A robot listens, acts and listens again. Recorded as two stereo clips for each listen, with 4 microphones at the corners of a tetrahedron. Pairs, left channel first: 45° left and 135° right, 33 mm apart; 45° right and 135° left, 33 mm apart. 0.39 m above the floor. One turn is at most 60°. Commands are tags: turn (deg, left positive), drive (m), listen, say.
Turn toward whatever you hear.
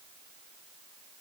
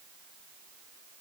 <listen/>
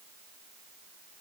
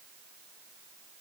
<listen/>
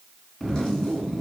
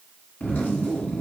<turn deg="-25"/>
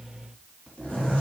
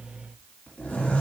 <say>Facing the zipper.</say>